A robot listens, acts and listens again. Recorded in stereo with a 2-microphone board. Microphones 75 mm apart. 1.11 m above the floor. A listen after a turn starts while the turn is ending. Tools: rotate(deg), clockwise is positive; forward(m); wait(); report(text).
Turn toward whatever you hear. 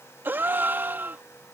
rotate(30)
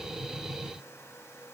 wait()
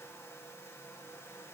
report("I heard a gasp, but can't make it out now. It was about straight ahead or 120° right.")